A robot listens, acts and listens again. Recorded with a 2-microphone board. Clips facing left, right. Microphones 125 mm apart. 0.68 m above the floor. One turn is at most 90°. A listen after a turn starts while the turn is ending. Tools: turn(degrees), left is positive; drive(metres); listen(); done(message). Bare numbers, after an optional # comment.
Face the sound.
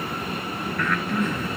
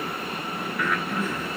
turn(-30)
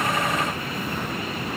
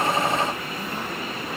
listen()
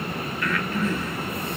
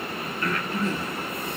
# So it is at 145° right.
turn(-90)
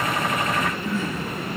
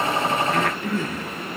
# The breathing is now 65° right.
turn(-65)
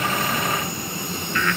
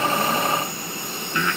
# The breathing is now 20° right.
turn(-20)
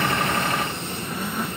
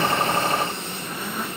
listen()
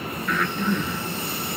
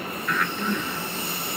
done("Found it: breathing, straight ahead.")